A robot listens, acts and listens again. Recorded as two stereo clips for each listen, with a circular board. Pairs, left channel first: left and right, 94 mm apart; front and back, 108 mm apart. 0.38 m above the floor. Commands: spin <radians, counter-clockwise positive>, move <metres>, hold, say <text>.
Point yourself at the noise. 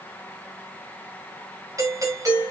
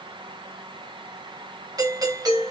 spin -2.36
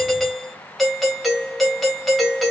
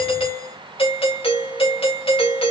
say Facing the doorbell.